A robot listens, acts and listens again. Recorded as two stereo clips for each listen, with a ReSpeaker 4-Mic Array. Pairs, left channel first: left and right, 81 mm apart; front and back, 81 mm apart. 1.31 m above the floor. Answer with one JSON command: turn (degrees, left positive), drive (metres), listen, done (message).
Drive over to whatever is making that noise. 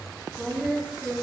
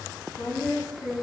{"drive": 1.0}
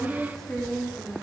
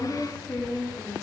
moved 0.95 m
{"drive": 1.0}
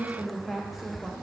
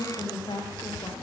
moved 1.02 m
{"drive": 1.0}
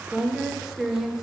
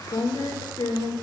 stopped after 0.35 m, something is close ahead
{"done": "I am next to the woman speaking."}